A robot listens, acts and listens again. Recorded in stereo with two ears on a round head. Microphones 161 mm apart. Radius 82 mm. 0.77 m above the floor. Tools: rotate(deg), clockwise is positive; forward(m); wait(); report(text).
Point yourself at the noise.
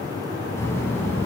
rotate(-30)
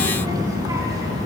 rotate(20)
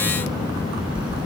report("Found it: a child speaking, straight ahead.")